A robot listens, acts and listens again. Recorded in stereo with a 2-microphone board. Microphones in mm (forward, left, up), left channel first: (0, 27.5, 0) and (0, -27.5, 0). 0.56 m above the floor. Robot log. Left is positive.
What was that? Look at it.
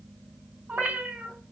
note: The cat meowing: about 25° right or 155° right.
cmd yaw -25
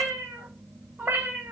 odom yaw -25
note: The cat meowing: about 35° right or 145° right.
cmd yaw -35
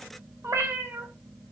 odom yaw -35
note: So it is at 125° right.
cmd yaw -125
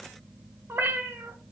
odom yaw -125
note: The cat meowing is now 50° right.
cmd yaw -50
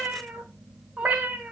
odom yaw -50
note: The cat meowing is now 15° right.
cmd yaw -15
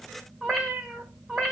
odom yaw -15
end: Found it: a cat meowing, straight ahead, 1 to 2 m away.